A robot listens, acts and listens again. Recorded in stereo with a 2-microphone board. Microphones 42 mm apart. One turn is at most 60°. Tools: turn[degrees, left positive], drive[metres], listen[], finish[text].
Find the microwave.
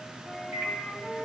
Thought: The microwave: about 60° right or 120° right.
Action: turn[-60]
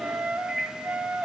Thought: So it is at 45° right.
Action: turn[-45]
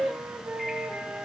Action: listen[]
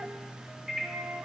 Action: finish[Facing the microwave.]